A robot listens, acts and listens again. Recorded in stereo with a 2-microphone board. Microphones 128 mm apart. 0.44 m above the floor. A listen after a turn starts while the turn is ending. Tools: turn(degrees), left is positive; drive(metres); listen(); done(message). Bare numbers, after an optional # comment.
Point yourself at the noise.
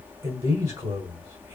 # The man speaking: about 30° right or 150° right.
turn(-30)
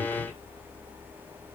listen()
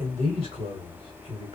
# So it is at 110° right.
turn(-110)
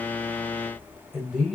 done("Facing the man speaking, 1 to 2 m away.")